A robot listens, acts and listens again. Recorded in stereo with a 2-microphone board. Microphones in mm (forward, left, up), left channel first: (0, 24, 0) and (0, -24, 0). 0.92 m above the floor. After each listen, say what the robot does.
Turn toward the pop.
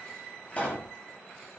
Turn 30° left.
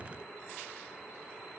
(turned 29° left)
Keep listening.
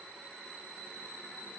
I heard a pop, but can't make it out now. It was about straight ahead or 120° left.